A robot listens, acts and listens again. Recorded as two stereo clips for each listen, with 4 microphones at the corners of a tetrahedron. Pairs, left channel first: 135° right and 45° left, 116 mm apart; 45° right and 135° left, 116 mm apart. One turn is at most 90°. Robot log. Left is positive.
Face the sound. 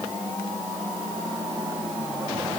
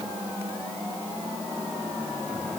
cmd idle
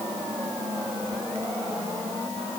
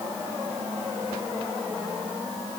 cmd idle
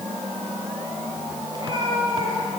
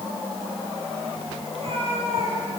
note: The cat meowing: 100° left.
cmd yaw +90
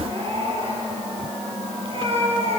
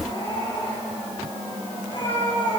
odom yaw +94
end: Facing the cat meowing.